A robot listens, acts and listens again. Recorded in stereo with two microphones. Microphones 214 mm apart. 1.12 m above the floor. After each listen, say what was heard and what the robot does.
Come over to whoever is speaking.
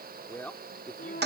Turn 30° left.
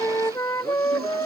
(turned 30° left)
Keep listening.
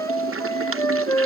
Keep listening.
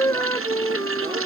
I heard a man speaking, but can't make it out now. It was about 25° right or 145° left. I did not reach it.